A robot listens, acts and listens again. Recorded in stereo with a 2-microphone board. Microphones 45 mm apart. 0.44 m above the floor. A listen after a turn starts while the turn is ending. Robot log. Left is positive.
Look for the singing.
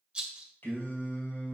note: The singing: about 55° left or 125° left.
cmd yaw +55
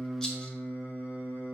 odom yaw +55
note: So it is at 50° left.
cmd yaw +50
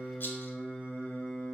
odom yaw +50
note: The singing is now 25° left.
cmd yaw +25
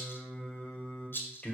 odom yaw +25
note: The singing is now 25° left.
cmd yaw +25
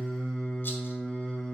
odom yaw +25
note: The singing is now 20° left.
cmd yaw +20
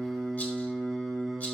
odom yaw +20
end: Facing the singing.